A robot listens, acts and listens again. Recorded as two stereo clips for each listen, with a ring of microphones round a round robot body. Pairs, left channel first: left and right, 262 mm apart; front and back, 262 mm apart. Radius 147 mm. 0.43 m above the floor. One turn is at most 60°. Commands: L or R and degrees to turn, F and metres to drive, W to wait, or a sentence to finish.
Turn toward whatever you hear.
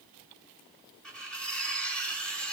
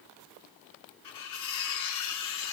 Facing the cutlery clinking.